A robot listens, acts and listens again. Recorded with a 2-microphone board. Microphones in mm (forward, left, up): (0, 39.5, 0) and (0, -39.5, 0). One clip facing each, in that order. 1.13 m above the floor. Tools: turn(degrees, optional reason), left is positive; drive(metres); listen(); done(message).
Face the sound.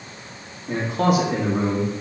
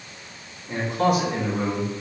turn(degrees=90)
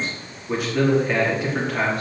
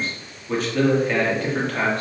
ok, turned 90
turn(degrees=10, reason="So it is at 10° left.")
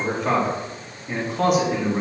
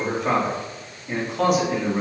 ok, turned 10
done("Found it: a man speaking, straight ahead.")